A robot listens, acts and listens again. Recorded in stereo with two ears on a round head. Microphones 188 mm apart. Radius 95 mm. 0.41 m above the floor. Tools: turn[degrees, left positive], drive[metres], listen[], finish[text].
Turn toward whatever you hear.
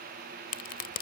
Thought: The crack: about 50° left or 130° left.
Action: turn[50]
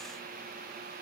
Action: listen[]
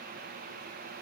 Action: finish[I heard a crack, but can't make it out now. It was about straight ahead or 80° left.]